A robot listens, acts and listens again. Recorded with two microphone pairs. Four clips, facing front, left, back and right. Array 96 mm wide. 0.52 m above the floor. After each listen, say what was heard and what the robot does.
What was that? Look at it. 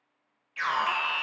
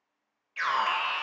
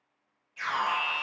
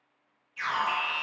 The alarm: 60° left. Turn 60° left.
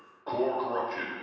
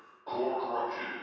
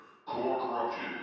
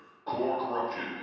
The alarm is now 10° right. Turn 10° right.
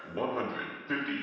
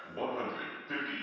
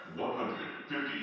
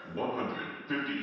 Facing the alarm.